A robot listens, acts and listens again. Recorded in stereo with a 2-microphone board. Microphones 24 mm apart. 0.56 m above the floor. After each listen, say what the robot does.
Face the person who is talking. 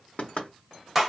Keep listening.
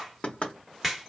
Keep listening.
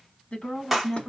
Turn 55° left.
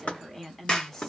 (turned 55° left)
Turn 20° left.
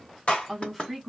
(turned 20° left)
Facing the woman speaking.